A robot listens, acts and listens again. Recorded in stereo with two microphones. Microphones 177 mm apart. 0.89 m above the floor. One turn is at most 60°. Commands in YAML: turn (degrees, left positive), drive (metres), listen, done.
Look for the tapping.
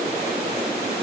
listen: true
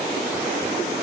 listen: true
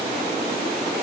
done: "I can't make out tapping."